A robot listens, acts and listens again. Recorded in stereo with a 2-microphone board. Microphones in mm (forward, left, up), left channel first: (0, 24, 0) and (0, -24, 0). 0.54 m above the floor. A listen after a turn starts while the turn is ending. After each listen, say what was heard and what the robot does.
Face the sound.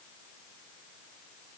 Keep listening.
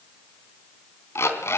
The alarm clock: about 65° left or 115° left. Turn 65° left.
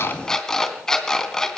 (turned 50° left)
So it is at 15° left. Turn 15° left.
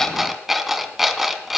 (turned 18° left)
Found it: an alarm clock, straight ahead, 2 to 4 m away.